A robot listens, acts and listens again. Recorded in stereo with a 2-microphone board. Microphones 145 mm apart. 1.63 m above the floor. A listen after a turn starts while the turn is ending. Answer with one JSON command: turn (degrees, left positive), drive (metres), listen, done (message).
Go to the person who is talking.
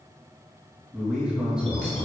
{"turn": -30}
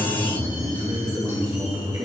{"turn": -145}
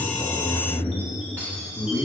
{"turn": 15}
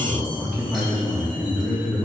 {"drive": 1.0}
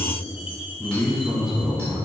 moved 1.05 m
{"drive": 1.0}
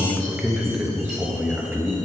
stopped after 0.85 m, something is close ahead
{"turn": -10}
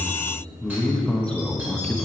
{"done": "Arrived at the man speaking, straight ahead."}